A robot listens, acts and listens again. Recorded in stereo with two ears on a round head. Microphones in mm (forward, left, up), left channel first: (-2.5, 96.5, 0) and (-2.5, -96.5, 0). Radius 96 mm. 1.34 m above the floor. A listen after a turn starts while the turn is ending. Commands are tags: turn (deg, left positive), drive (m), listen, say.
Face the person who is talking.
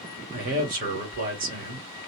<turn deg="-40"/>
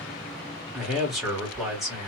<say>Found it: a man speaking, straight ahead, 1 to 2 m away.</say>